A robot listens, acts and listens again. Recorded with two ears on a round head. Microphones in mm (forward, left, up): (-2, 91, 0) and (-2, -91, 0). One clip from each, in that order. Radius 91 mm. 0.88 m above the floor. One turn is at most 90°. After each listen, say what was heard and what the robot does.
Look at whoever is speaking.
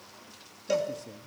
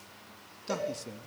The man speaking: about 50° right or 130° right. Turn 50° right.
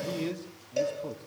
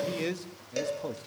So it is at 70° right. Turn 70° right.
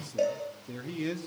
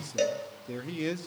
The man speaking is now 15° right. Turn 15° right.
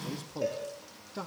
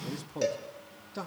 Facing the man speaking, 1 to 2 m away.